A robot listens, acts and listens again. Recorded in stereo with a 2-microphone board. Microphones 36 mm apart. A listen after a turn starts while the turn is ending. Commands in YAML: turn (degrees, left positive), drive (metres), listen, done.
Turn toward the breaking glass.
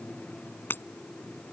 turn: 70
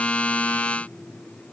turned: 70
listen: true
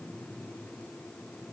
done: "I heard breaking glass, but can't make it out now. It was about straight ahead or 40° left."